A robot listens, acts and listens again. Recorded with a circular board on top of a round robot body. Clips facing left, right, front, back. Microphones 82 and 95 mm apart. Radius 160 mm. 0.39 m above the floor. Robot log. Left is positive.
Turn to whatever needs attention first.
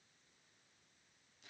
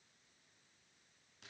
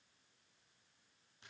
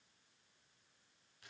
cmd idle
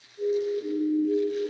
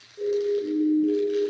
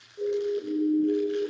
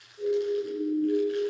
note: The siren: 30° right.
cmd yaw -30
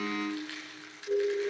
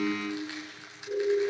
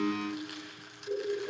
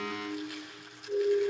note: The siren is now 15° left.
cmd yaw +15
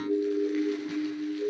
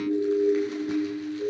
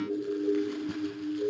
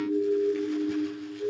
end: Facing the siren.